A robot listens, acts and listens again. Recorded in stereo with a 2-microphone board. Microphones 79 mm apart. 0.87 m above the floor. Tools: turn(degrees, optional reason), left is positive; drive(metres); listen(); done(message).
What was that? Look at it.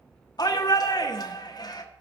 turn(degrees=60, reason="The shout: about 60° left or 120° left.")
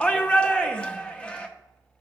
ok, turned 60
turn(degrees=15, reason="So it is at 15° left.")
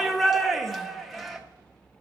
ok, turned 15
done("Facing the shout, under 1 m away.")